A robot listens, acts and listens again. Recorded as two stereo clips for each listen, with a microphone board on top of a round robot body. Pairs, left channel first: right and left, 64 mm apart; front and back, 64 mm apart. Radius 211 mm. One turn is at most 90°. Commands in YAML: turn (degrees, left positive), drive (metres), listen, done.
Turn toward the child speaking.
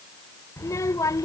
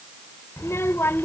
turn: -55
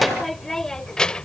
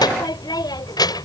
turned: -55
turn: -15
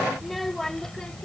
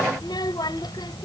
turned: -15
turn: -10
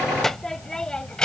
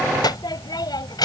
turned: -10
turn: -15
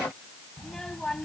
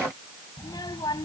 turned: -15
turn: -10
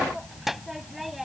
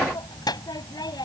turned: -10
done: "Facing the child speaking."